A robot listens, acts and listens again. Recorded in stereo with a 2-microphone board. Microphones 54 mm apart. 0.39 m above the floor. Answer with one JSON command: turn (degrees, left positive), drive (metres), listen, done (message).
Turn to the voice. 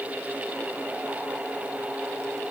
{"listen": true}
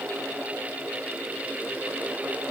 {"listen": true}
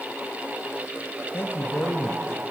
{"turn": 45}
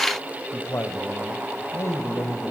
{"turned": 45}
{"turn": 75}
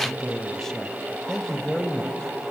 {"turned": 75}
{"turn": 10}
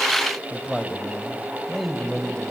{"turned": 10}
{"done": "Facing the man speaking."}